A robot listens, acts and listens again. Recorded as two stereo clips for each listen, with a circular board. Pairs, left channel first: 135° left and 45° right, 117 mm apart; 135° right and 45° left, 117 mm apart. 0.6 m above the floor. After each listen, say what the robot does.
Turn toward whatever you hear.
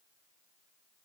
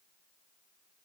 Keep listening.
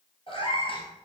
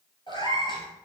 Turn 175° left.
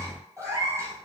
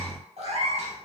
Turn 20° left.
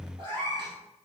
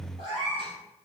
Facing the cat meowing, 2 to 4 m away.